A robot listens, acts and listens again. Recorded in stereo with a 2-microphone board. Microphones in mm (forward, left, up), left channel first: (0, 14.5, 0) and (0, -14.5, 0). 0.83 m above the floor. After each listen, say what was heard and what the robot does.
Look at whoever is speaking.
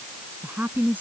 Turn 90° right.
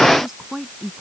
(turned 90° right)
So it is at 10° right. Turn 10° right.
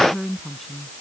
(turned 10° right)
Found it: a woman speaking, straight ahead.